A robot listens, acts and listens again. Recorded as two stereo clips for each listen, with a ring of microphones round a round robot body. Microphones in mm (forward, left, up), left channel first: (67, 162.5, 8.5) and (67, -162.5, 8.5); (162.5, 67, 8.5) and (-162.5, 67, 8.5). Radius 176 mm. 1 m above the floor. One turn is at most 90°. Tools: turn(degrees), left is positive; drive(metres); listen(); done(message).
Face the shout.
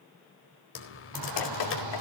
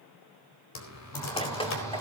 turn(degrees=-80)
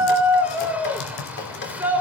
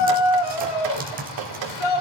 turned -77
done("Facing the shout, over 4 m away.")